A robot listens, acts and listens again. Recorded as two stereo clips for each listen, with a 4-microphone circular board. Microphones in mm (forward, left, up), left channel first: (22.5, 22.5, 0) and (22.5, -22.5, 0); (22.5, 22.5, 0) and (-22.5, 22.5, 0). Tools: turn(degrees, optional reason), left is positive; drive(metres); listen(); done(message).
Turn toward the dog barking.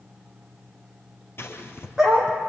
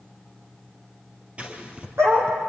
turn(degrees=-170, reason="The dog barking: 170° right.")
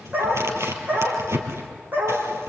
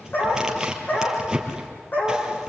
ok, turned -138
turn(degrees=-45, reason="The dog barking is now 45° right.")
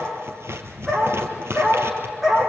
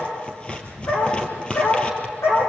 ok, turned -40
turn(degrees=-10, reason="The dog barking is now 10° right.")
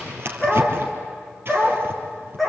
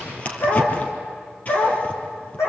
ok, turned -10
done("Found it: a dog barking, straight ahead, over 4 m away.")